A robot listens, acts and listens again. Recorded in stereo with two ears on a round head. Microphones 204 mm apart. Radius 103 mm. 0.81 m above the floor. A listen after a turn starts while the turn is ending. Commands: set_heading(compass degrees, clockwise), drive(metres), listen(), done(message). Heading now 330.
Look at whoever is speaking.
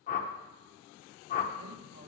set_heading(10)
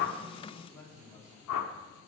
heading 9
set_heading(354)
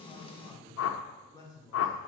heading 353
set_heading(333)
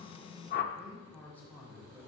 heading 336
set_heading(326)
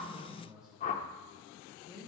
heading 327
done("Facing the man speaking, 2 to 4 m away.")